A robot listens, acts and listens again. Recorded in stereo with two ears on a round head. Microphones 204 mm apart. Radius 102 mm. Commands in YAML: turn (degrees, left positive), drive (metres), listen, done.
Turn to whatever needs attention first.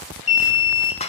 turn: 30
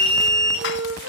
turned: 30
done: "Facing the alarm."